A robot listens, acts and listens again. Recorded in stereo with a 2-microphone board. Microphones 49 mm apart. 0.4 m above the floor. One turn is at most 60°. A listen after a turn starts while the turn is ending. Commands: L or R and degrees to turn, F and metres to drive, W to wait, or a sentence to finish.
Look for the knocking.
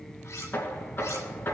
L50
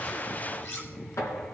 L60
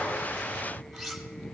L25
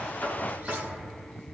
Facing the knocking.